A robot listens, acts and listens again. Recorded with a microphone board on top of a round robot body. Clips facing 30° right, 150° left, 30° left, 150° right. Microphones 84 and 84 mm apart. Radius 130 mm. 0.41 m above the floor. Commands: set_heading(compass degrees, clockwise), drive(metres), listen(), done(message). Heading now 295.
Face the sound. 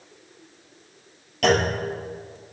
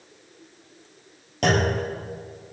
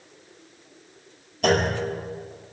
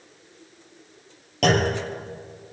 set_heading(80)
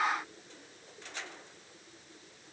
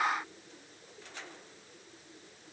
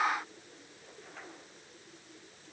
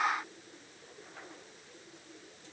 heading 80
done("I heard a clunk from this way, but can't make it out now.")